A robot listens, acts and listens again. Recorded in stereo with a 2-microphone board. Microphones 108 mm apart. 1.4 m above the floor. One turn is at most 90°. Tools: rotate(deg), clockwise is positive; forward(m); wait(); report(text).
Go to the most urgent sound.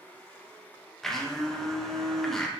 wait()
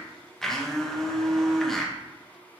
wait()
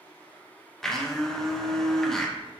report("I can't make out anything urgent, only a blender.")